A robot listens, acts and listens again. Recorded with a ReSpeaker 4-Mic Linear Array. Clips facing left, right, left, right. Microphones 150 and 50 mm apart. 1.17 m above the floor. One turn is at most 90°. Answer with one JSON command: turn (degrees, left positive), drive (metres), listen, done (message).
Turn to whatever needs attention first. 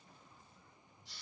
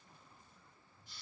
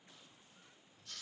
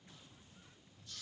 {"listen": true}
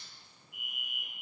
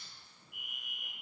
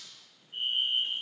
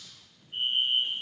{"turn": -60}
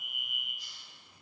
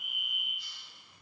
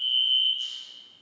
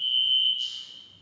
{"done": "Facing the fire alarm."}